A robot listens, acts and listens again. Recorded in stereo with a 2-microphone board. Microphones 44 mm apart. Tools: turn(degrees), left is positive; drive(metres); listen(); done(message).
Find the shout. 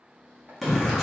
turn(degrees=30)
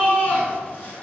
turn(degrees=150)
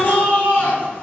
turn(degrees=40)
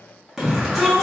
done("Found it: a shout, straight ahead.")